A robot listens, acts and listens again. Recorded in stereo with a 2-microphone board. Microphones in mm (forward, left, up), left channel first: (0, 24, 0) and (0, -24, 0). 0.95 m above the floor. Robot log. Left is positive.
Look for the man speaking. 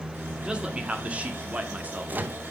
note: The man speaking: about 30° right or 150° right.
cmd yaw -30
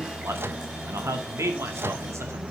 note: So it is at 100° right.
cmd yaw -100
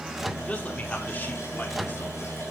note: The man speaking is now 30° left.
cmd yaw +30
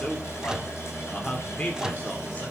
note: The man speaking is now 25° left.
cmd yaw +25
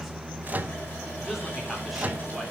end: Found it: a man speaking, straight ahead.